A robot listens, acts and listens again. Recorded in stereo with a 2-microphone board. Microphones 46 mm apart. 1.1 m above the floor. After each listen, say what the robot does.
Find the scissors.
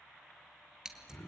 Turn 15° right.
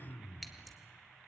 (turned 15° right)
Facing the scissors, 2 to 4 m away.